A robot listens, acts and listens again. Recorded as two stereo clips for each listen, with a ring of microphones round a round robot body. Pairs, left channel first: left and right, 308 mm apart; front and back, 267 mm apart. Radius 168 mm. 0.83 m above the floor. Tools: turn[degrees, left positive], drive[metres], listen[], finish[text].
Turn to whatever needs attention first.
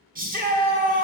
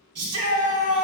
Thought: The shout: 150° right.
Action: turn[-150]
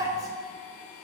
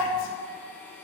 Thought: The shout is now 10° right.
Action: turn[-10]
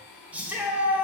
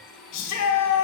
Action: finish[Facing the shout.]